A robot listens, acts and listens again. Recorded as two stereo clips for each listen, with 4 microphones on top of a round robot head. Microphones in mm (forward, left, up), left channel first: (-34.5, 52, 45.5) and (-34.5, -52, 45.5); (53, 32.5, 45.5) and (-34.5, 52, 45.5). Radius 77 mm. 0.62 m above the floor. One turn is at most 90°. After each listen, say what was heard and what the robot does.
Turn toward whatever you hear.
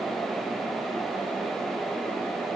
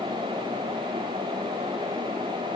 Keep listening.
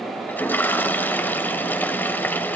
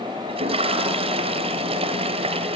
The toilet flushing: 160° left. Turn 90° left.
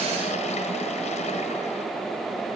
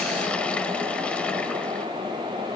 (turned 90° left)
Nothing new. It was at 70° left. Turn 70° left.
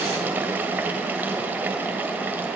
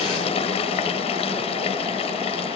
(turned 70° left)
The toilet flushing is now 15° right. Turn 15° right.
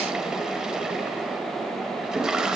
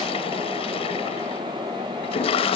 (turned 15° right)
Facing the toilet flushing.